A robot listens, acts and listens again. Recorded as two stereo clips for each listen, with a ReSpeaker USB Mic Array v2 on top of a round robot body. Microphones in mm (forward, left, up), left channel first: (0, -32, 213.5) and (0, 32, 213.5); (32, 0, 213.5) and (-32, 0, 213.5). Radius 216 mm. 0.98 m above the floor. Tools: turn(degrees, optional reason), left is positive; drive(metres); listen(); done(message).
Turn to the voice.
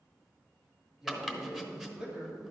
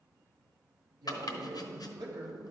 turn(degrees=160, reason="The man speaking: 160° left.")
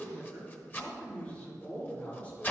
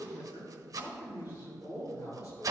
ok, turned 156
turn(degrees=-25, reason="The man speaking is now 25° right.")
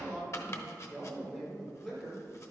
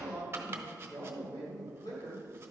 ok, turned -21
turn(degrees=-15, reason="The man speaking is now 15° right.")
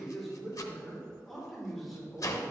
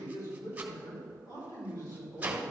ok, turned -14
done("Found it: a man speaking, straight ahead.")